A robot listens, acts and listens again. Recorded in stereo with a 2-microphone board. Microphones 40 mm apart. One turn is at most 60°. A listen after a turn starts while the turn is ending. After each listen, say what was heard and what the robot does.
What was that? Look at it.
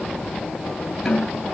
Turn 30° left.
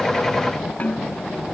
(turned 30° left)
So it is at 145° left. Turn 60° left.
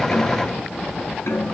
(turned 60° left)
The snare drum is now 100° left. Turn 60° left.
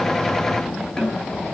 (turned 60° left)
The snare drum is now 20° left. Turn 20° left.
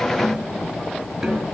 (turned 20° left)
Found it: a snare drum, straight ahead.